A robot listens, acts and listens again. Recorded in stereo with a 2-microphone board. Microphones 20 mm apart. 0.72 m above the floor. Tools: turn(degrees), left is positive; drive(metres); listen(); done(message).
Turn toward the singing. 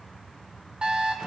listen()
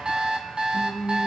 turn(degrees=-75)
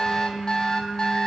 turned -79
turn(degrees=-20)
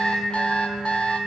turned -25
turn(degrees=10)
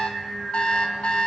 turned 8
done("Facing the singing, over 4 m away.")